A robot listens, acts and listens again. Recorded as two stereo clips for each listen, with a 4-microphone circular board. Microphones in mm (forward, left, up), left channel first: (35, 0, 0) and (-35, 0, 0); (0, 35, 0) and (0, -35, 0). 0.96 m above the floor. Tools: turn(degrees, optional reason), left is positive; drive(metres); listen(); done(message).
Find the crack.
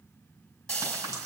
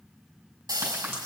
turn(degrees=-145, reason="The crack: 145° right.")
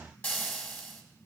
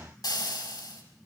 done("Facing where the crack came from. I can't hear it now.")